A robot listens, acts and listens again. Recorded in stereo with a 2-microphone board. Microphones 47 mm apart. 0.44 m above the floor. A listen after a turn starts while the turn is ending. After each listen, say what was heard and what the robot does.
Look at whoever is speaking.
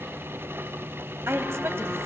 The woman speaking: about 65° right or 115° right. Turn 65° right.
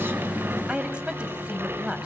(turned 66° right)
So it is at 25° right. Turn 25° right.
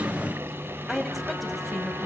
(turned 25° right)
Facing the woman speaking, 2 to 4 m away.